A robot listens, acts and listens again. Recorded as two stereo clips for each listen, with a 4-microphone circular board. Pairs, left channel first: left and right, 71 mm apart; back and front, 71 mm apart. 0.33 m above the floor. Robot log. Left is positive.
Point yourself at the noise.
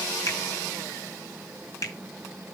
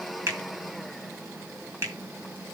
note: The finger snap: 55° left.
cmd yaw +55
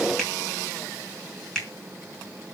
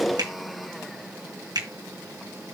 note: The finger snap is now 10° left.
cmd yaw +10
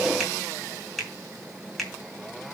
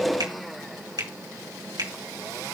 end: Facing the finger snap, 2 to 4 m away.